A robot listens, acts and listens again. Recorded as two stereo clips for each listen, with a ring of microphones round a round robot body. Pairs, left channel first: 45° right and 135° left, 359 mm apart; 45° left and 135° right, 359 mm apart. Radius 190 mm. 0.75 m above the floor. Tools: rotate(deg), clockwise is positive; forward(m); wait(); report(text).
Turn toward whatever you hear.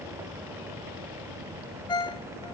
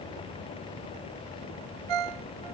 rotate(125)
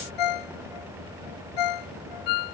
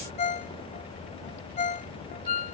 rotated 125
rotate(25)
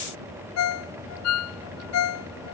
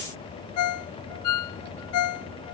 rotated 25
report("Found it: a ringtone, straight ahead.")